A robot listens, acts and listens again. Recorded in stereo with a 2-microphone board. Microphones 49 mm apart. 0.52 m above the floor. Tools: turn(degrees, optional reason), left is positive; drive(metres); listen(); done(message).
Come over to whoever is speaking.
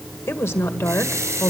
turn(degrees=65, reason="The woman speaking: about 65° left or 115° left.")
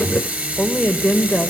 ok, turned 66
turn(degrees=15, reason="So it is at 15° left.")
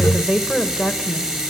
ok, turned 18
drive(metres=1.0)
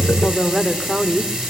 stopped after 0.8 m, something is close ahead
done("Arrived at the woman speaking, straight ahead.")